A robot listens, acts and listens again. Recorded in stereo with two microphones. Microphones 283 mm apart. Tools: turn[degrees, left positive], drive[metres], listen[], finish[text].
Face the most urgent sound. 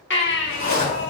Thought: The baby crying: about 40° left or 140° left.
Action: turn[40]
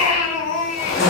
Thought: So it is at 90° left.
Action: turn[90]
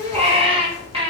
Thought: The baby crying is now 25° right.
Action: turn[-25]
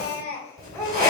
Thought: The baby crying is now 10° left.
Action: turn[10]
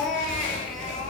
Action: finish[Found it: a baby crying, straight ahead.]